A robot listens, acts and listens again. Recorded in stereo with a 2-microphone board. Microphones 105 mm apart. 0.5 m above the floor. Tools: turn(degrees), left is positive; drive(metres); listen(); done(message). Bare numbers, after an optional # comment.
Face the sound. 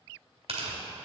# The tearing paper: about 70° right or 110° right.
turn(-70)
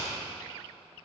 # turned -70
listen()
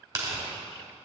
# So it is at 35° right.
turn(-35)
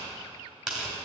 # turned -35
done("Found it: tearing paper, straight ahead.")